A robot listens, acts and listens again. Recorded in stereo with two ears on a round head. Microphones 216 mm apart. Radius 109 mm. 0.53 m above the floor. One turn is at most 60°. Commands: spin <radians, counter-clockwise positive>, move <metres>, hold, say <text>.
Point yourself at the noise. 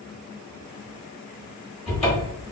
spin 0.44
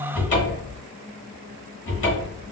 spin 1.05
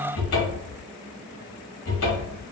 spin 1.05
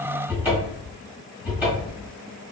spin -0.17
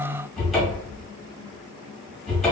say Found it: a cupboard door, straight ahead, 1 to 2 m away.